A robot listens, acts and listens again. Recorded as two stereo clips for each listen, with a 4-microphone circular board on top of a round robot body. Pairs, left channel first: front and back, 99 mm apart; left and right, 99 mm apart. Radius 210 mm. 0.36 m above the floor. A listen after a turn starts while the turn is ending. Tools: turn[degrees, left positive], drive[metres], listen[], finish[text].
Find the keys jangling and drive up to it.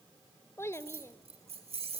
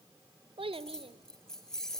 Thought: The keys jangling: 175° left.
Action: turn[175]
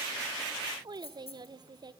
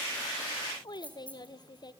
Thought: The keys jangling is now 15° left.
Action: turn[15]
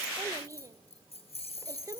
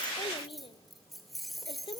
Action: drive[1.0]
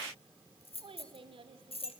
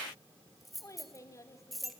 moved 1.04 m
Action: drive[1.0]
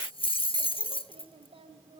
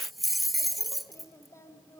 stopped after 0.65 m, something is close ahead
Action: finish[I am next to the keys jangling.]